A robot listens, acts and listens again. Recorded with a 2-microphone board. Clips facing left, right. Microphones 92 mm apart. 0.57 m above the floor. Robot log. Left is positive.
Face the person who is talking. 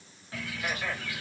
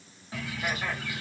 cmd idle
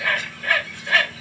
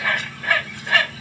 cmd idle
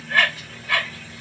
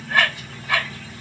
end: I can't make out anyone speaking to turn to.